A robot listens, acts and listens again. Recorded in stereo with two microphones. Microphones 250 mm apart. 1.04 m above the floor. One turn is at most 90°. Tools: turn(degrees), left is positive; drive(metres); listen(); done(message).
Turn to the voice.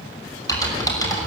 listen()
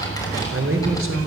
turn(degrees=-65)
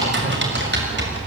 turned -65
listen()
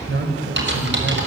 turn(degrees=-50)
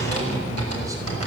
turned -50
listen()
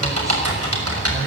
listen()
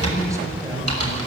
done("Facing where the man speaking came from. I can't hear it now.")